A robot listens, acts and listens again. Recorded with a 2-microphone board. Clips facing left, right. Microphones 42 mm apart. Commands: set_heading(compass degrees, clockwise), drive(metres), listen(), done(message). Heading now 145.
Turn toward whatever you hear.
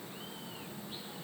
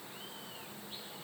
listen()
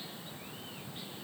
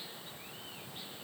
listen()
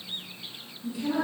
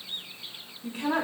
set_heading(195)
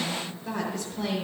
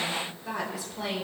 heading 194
done("Found it: a woman speaking, straight ahead.")